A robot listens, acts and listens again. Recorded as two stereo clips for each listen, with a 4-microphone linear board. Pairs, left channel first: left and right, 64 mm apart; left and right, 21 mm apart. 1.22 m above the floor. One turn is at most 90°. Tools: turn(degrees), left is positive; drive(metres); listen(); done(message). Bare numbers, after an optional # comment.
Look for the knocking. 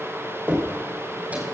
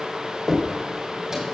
# The knocking: about 30° right or 150° right.
turn(-30)
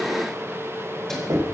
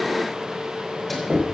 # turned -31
# So it is at 120° right.
turn(-90)
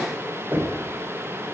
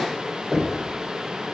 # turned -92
# The knocking is now 30° right.
turn(-30)
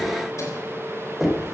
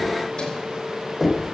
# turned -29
done("Found it: knocking, straight ahead, 2 to 4 m away.")